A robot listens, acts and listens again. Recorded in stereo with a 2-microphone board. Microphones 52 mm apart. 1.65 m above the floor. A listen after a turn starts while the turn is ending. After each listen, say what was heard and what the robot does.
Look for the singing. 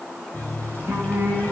The singing: about 50° right or 130° right. Turn 50° right.
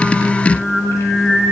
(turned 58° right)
So it is at 15° left. Turn 15° left.
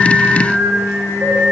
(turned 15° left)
Found it: singing, straight ahead.